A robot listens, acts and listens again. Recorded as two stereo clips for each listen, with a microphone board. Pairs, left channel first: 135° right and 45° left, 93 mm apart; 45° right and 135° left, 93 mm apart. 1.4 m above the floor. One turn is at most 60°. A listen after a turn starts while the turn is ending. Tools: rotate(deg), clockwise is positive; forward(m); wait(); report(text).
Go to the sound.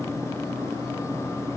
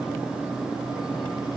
wait()
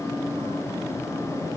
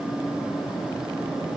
wait()
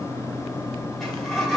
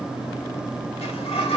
rotate(50)
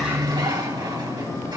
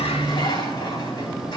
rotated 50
wait()
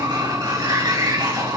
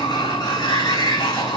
forward(1.0)
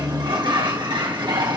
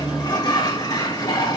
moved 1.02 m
forward(1.0)
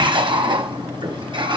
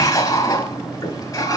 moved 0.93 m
forward(1.0)
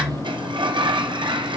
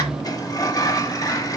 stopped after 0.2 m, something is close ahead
rotate(-10)
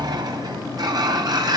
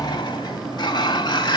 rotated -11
report("Arrived at the sliding door, straight ahead.")